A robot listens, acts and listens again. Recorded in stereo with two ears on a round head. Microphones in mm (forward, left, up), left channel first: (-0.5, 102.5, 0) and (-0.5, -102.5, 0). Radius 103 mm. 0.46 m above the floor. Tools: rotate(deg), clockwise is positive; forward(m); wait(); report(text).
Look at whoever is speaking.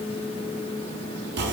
wait()
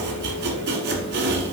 wait()
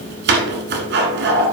report("I can't make out anyone speaking, only chopping.")